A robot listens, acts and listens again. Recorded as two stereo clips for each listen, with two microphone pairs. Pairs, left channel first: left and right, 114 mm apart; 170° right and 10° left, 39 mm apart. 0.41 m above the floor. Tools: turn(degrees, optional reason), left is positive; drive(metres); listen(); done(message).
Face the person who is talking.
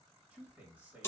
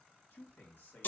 turn(degrees=-165, reason="The man speaking: 165° right.")
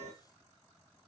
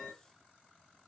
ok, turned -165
listen()
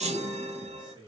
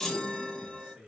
turn(degrees=-50, reason="The man speaking is now 50° right.")
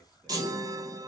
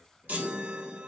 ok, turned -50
listen()
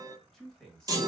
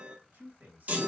done("Facing the man speaking, 1 to 2 m away.")